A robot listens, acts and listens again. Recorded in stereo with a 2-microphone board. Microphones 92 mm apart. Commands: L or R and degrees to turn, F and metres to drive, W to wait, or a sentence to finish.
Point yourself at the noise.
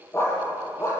L30
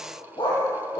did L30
L120
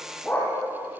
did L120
L20
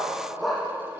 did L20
Found it: a dog barking, straight ahead, over 4 m away.